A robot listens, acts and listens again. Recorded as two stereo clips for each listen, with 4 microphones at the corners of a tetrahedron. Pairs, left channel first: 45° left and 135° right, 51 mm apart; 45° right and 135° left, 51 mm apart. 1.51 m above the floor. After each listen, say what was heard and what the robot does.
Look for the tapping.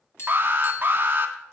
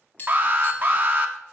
The tapping: 10° left. Turn 10° left.
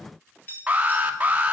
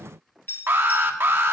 Found it: tapping, straight ahead.